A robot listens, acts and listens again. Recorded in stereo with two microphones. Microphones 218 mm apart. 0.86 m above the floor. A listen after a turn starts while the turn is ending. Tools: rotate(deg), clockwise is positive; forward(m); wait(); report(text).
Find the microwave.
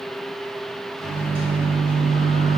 rotate(25)
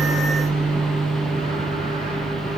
rotate(130)
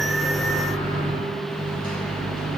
rotate(-45)
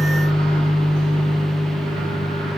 report("Facing the microwave.")